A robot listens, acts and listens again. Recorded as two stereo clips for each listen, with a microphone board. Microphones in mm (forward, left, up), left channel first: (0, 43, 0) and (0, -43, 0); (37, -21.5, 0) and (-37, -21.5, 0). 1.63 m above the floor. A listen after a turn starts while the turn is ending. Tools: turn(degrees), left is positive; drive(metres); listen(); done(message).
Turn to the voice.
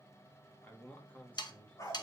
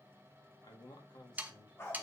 turn(degrees=15)
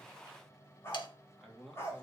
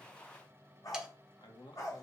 done("Found it: a man speaking, straight ahead, 1 to 2 m away.")